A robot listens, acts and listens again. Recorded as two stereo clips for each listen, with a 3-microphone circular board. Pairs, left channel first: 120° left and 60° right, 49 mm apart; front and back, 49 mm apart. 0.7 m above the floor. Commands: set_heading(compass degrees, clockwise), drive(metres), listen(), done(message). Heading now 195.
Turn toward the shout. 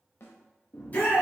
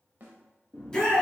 set_heading(125)
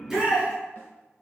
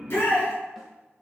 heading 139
set_heading(124)
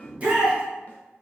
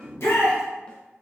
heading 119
done("Found it: a shout, straight ahead, under 1 m away.")